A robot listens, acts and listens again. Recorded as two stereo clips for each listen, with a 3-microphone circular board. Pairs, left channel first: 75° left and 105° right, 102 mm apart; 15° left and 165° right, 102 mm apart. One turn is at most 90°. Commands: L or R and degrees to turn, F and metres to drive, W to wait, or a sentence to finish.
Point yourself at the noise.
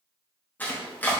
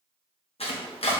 Found it: chopping, straight ahead, 1 to 2 m away.